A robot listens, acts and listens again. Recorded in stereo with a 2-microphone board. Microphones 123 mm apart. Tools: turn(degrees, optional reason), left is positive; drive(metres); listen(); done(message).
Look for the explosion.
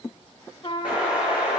turn(degrees=-30)
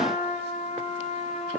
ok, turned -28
listen()
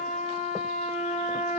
done("I heard an explosion, but can't make it out now. It was about 20° left or 140° right.")